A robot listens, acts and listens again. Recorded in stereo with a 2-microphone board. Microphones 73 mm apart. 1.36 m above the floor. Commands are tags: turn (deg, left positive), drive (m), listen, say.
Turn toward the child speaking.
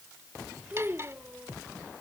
<turn deg="-25"/>
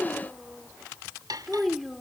<say>Facing the child speaking.</say>